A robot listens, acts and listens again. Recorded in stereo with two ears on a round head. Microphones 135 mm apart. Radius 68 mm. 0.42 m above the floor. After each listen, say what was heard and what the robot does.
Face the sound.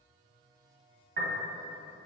The piano: about 70° right or 110° right. Turn 70° right.
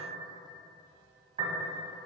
So it is at 40° right. Turn 40° right.
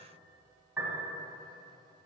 The piano is now 10° right. Turn 10° right.
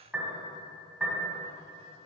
Facing the piano.